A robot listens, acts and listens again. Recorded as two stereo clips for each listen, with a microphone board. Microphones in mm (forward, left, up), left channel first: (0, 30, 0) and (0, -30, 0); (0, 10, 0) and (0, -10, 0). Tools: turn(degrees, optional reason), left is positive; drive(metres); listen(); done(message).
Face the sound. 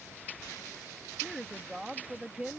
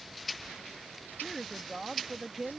turn(degrees=-20, reason="The woman speaking: about 20° right or 160° right.")
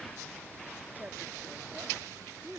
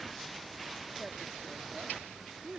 turn(degrees=-130, reason="So it is at 130° right.")
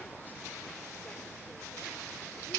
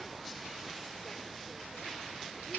listen()
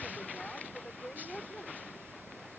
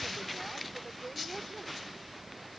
done("Found it: a woman speaking, straight ahead.")